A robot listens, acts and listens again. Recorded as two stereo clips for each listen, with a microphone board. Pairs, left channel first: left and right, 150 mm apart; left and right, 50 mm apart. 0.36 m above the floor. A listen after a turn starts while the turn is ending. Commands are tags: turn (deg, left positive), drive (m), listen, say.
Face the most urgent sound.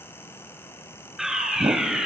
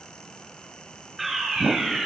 <turn deg="-30"/>
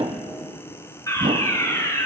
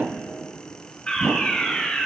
<turn deg="25"/>
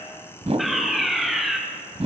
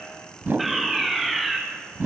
<say>Facing the fire alarm.</say>